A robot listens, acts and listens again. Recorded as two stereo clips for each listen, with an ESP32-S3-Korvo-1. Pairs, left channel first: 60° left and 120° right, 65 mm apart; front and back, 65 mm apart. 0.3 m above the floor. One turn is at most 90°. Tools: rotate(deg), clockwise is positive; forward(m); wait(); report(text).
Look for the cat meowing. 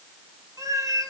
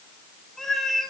rotate(85)
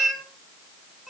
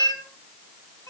rotate(30)
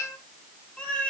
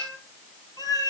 rotate(10)
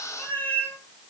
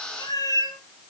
report("Facing the cat meowing.")